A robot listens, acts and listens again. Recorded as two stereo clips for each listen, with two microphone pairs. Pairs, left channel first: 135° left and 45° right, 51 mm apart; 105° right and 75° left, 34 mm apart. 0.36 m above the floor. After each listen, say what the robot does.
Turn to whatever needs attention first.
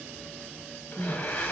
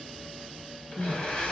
Turn 85° right.
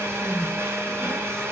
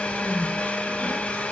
Turn 15° left.
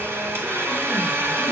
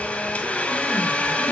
Keep listening.
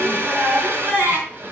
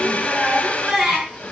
Facing the crying.